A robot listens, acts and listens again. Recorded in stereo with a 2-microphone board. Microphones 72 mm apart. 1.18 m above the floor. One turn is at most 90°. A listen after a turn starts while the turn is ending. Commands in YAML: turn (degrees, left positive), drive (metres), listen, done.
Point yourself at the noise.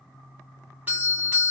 turn: -25
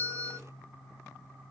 turn: -90
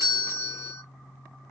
turn: -35
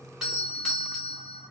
done: "Found it: a doorbell, straight ahead, 1 to 2 m away."